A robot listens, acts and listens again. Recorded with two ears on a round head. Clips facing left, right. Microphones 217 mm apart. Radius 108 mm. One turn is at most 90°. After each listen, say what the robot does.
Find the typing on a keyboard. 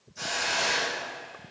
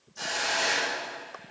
Keep listening.
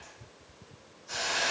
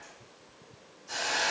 Keep listening.
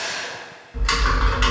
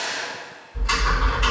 Turn 90° left.
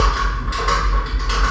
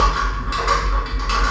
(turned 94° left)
Turn 10° right.
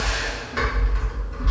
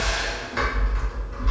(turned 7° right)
Found it: typing on a keyboard, straight ahead, 1 to 2 m away.